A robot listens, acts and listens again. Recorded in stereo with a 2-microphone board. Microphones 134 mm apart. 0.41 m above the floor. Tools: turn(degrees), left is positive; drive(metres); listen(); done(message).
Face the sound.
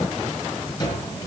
turn(degrees=30)
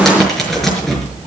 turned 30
done("Found it: a cupboard door, straight ahead, over 4 m away.")